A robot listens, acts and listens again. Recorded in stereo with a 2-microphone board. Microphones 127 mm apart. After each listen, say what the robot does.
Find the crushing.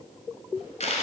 Keep listening.
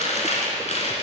Keep listening.
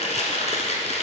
I can't make out crushing, only chewing.